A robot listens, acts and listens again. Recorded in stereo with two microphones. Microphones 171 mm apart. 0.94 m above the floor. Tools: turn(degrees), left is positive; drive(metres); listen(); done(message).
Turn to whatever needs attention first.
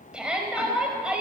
turn(degrees=-30)
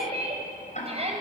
turn(degrees=-145)
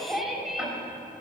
done("Found it: a shout, straight ahead, over 4 m away.")